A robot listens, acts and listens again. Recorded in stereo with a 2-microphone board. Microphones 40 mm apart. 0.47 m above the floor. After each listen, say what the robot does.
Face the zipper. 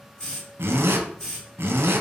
Turn 90° right.
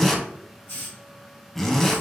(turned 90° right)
Facing the zipper.